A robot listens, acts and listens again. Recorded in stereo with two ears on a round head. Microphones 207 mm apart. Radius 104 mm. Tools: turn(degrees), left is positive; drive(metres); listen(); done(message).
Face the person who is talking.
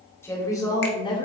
turn(degrees=25)
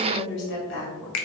turn(degrees=120)
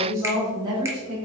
turn(degrees=-25)
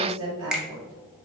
turn(degrees=-20)
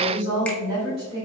turn(degrees=-20)
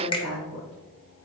done("Found it: a woman speaking, straight ahead, 2 to 4 m away.")